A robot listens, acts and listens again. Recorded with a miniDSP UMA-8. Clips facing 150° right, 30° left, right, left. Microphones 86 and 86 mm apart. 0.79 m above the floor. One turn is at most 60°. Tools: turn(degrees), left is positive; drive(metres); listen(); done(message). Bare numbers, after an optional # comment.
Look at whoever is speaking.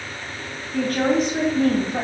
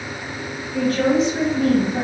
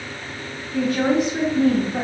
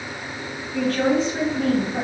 # The woman speaking: straight behind.
turn(60)
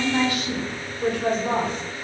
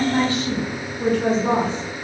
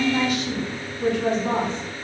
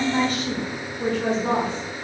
# The woman speaking is now 50° left.
turn(50)
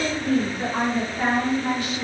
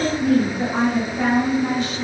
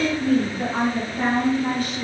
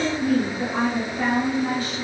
# The woman speaking is now 35° right.
turn(-35)
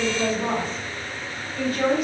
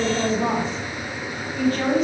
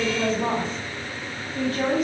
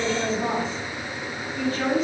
# The woman speaking is now 20° right.
turn(-20)
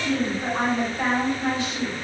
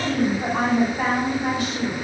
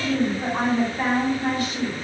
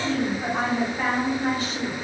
# The woman speaking is now 10° right.
turn(-10)
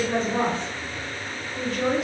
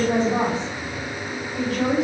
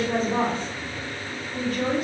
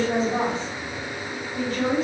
done("Found it: a woman speaking, straight ahead.")